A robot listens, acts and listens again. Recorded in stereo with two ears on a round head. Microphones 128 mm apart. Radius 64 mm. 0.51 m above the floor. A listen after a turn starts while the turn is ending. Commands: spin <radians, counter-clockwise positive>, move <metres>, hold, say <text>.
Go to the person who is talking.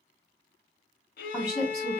spin -0.35
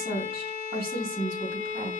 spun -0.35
spin -2.44
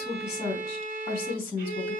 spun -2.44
spin 0.70
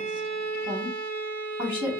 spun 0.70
spin -0.26
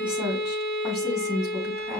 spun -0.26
move 1.0
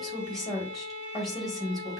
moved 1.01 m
move 1.0
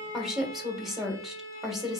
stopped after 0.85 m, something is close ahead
say Arrived at the woman speaking, straight ahead.